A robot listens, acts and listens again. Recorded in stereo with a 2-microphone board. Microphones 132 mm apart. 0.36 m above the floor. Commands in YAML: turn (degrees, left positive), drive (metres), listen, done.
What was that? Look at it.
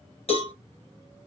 turn: 50
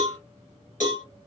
turn: 80
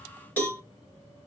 turn: 10
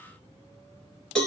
done: "Found it: a cowbell, straight ahead, 1 to 2 m away."